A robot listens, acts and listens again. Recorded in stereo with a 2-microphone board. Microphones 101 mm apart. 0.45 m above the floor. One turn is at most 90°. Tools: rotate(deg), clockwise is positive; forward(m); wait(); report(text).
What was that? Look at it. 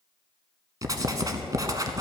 rotate(40)
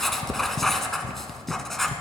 report("Facing the writing, under 1 m away.")